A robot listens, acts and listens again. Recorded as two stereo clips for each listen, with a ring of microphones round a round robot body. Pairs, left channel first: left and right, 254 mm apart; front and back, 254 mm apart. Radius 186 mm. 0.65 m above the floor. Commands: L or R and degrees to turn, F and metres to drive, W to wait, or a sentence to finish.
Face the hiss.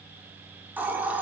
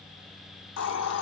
Facing the hiss, 1 to 2 m away.